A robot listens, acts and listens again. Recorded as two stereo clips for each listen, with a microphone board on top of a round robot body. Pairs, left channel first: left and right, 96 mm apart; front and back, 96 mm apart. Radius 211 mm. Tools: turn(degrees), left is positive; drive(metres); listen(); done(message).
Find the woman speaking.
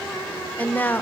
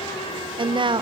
turn(degrees=155)
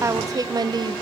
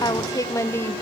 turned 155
turn(degrees=-60)
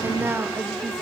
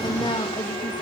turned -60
turn(degrees=-30)
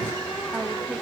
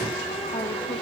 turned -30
listen()
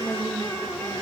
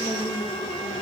turn(degrees=-15)
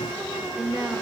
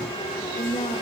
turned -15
done("Found it: a woman speaking, straight ahead.")